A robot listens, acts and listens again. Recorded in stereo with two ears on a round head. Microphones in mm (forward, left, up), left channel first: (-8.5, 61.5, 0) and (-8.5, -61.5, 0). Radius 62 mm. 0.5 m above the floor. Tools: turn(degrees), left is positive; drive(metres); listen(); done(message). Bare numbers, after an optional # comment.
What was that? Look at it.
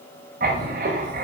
# The writing: about 65° right or 115° right.
turn(-65)
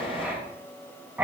# So it is at 10° right.
turn(-10)
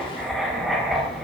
done("Facing the writing.")